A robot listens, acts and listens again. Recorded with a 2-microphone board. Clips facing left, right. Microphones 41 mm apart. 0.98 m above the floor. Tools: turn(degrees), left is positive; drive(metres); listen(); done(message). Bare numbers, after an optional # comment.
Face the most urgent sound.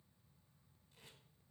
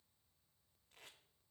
listen()
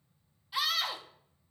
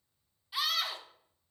turn(30)
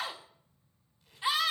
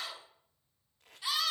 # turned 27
# So it is at 155° left.
turn(155)
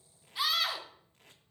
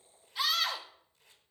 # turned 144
# The scream is now 10° left.
turn(10)
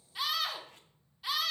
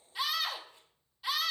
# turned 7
done("Found it: a scream, straight ahead.")